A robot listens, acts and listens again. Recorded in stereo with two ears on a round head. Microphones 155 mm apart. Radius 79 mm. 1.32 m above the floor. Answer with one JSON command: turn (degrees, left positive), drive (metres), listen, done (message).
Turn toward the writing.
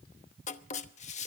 {"turn": 45}
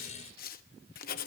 {"turn": 75}
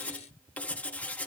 {"turn": 10}
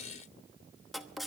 {"done": "Found it: writing, straight ahead, 1 to 2 m away."}